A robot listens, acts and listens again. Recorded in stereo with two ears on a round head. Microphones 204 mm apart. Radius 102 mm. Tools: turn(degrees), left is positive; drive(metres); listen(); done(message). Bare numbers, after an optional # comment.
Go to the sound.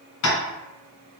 # The tapping: about 60° left or 120° left.
turn(60)
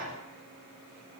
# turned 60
listen()
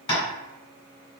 # So it is at 25° left.
turn(25)
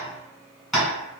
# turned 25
drive(1.0)
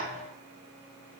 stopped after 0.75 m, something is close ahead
listen()
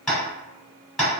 done("I am next to the tapping.")